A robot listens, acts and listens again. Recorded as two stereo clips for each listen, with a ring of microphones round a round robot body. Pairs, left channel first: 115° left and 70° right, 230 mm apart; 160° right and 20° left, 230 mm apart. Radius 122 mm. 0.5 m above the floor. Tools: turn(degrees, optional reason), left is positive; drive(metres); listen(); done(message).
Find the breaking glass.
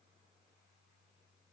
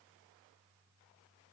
listen()
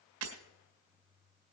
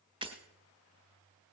turn(degrees=-45, reason="The breaking glass: 45° right.")
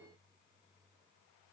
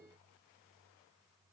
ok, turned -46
done("I heard breaking glass from this way, but can't make it out now.")